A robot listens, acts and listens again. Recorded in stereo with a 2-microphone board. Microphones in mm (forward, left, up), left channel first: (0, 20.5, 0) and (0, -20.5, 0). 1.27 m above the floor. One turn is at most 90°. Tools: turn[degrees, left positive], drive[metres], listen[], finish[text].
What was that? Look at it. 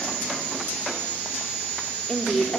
Action: turn[30]
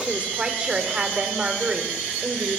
Thought: So it is at 30° right.
Action: turn[-30]
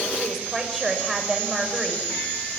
Action: finish[Facing the woman speaking, over 4 m away.]